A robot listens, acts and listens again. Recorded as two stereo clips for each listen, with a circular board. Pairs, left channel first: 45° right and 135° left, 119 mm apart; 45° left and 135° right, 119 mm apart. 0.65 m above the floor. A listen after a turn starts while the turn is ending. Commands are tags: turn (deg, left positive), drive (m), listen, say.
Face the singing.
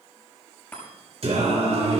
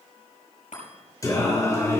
<turn deg="110"/>
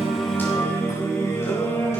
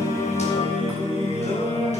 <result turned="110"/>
<turn deg="25"/>
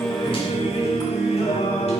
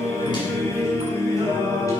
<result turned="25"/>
<turn deg="-15"/>
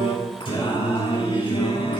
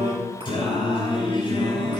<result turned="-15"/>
<say>Found it: singing, straight ahead, over 4 m away.</say>